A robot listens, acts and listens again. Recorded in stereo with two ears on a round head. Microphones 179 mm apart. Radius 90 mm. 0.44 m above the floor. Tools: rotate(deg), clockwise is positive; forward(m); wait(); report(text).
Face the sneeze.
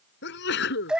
rotate(-60)
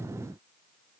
wait()
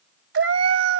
report("I heard a sneeze, but can't make it out now. It was about straight ahead or 60° left.")